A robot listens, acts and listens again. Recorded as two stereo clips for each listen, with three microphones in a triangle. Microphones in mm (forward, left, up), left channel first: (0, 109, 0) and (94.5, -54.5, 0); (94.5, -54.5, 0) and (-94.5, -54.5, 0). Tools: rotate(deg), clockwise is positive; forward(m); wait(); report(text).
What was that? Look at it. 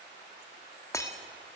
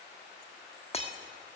rotate(-50)
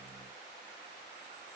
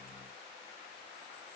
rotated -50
report("Facing where the breaking glass came from. I can't hear it now.")